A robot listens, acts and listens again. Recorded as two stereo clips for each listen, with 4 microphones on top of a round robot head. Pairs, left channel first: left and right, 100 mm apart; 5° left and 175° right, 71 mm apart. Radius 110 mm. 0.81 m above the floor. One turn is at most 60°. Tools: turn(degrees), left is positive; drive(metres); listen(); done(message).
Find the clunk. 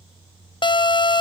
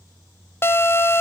listen()
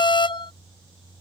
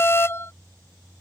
listen()
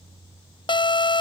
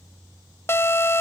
done("I can't make out a clunk to turn to.")